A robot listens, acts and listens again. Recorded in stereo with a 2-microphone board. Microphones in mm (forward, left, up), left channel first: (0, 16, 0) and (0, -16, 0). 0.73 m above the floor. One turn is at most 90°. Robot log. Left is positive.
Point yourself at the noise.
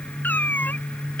note: The cat meowing: about 70° left or 110° left.
cmd yaw +70
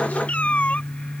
note: So it is at 40° left.
cmd yaw +40
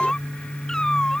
note: The cat meowing is now 20° left.
cmd yaw +20
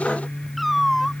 end: Facing the cat meowing.